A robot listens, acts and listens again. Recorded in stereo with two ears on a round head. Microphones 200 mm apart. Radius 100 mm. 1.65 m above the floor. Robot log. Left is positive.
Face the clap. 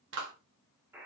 note: The clap: about 60° right or 120° right.
cmd yaw -60
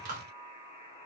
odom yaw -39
note: So it is at 50° right.
cmd yaw -50
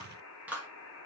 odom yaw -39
note: The clap is now 10° right.
cmd yaw -10
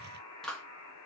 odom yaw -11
end: Facing the clap, 1 to 2 m away.